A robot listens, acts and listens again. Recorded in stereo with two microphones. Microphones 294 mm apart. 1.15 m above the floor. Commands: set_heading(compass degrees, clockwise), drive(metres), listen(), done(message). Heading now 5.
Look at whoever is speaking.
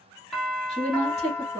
set_heading(345)
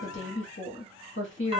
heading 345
set_heading(210)
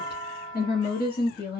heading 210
set_heading(175)
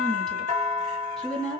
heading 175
done("Facing the woman speaking.")